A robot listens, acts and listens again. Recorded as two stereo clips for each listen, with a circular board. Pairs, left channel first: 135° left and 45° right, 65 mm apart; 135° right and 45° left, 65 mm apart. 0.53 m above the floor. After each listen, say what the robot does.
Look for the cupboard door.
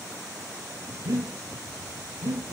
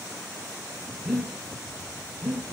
Keep listening.
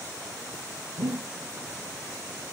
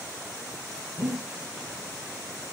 Keep listening.
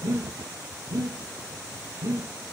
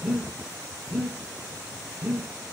I can't make out a cupboard door, only breathing.